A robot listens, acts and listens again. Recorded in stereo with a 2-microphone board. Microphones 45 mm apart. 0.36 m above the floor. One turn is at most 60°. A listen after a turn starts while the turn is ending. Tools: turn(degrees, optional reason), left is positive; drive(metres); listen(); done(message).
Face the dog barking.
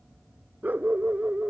turn(degrees=-30, reason="The dog barking: about 30° right or 150° right.")
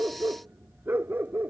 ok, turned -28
turn(degrees=-60, reason="So it is at 130° right.")
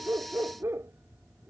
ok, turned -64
turn(degrees=-60, reason="The dog barking is now 70° right.")
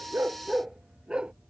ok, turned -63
turn(degrees=-20, reason="The dog barking is now 20° right.")
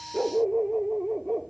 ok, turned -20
done("Facing the dog barking.")